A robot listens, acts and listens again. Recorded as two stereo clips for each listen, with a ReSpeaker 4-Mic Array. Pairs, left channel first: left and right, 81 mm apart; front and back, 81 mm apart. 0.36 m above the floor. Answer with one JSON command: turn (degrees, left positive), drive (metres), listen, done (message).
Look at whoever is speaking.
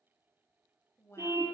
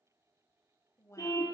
{"turn": 40}
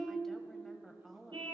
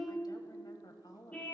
{"done": "Facing the woman speaking."}